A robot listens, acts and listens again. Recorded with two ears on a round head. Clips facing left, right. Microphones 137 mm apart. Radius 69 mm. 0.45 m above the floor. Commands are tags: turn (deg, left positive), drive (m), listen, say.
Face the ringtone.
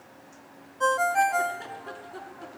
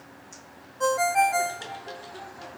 <turn deg="-30"/>
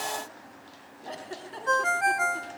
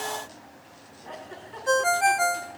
<turn deg="-140"/>
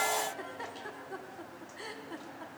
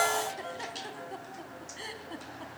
<turn deg="-55"/>
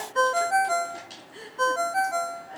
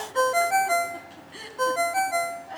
<turn deg="-10"/>
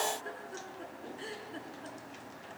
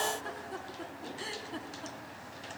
<listen/>
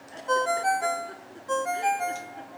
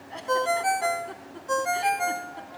<say>Found it: a ringtone, straight ahead, under 1 m away.</say>